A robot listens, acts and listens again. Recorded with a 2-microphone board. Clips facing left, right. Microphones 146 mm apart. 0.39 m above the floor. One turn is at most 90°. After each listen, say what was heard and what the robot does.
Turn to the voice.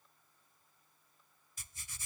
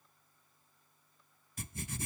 Keep listening.
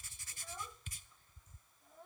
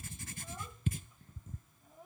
Turn 30° right.
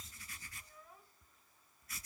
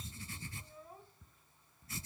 So it is at 140° right. Turn 90° right.
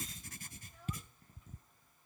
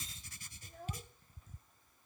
The child speaking is now 60° right. Turn 60° right.
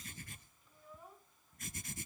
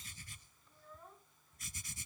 The child speaking is now 10° left. Turn 10° left.
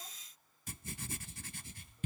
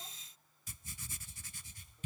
Keep listening.
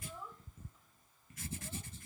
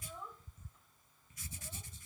Found it: a child speaking, straight ahead.